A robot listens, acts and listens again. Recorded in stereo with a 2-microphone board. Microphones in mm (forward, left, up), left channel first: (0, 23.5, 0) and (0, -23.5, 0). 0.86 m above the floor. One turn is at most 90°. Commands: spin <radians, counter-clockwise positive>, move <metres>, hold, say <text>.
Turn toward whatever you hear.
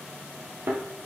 spin -0.79
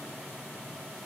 hold
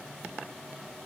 say I heard a thud, but can't make it out now. It was about straight ahead or 90° right.